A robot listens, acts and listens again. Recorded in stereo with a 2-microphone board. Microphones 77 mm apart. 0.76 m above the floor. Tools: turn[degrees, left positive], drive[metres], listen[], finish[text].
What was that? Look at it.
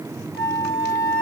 Thought: The flute: about 20° right or 160° right.
Action: turn[-20]
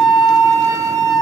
Thought: So it is at 140° right.
Action: turn[-140]
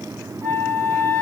Thought: The flute is now 20° left.
Action: turn[20]
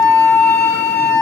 Thought: The flute is now 10° left.
Action: turn[10]
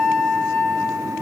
Action: finish[Found it: a flute, straight ahead.]